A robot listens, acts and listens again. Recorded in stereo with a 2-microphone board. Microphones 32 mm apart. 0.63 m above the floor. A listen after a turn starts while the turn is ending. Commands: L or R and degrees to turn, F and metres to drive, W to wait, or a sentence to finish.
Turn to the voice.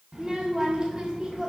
R25
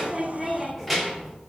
Facing the child speaking.